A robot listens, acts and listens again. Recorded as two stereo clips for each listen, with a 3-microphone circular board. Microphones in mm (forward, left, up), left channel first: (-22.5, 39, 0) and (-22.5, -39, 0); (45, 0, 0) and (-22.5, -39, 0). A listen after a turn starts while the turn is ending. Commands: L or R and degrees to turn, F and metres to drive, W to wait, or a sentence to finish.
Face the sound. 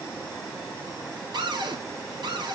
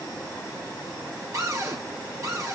R105
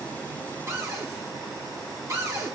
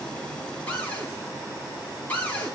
R40
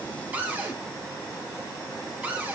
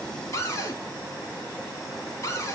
R20
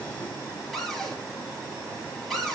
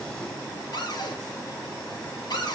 Facing the cupboard door.